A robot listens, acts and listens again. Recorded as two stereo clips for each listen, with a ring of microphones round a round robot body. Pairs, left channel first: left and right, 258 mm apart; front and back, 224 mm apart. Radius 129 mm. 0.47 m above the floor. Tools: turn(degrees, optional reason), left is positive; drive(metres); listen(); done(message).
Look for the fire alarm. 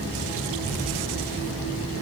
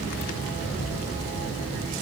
listen()
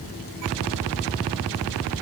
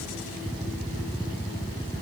listen()
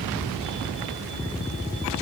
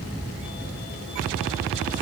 done("I can't make out a fire alarm.")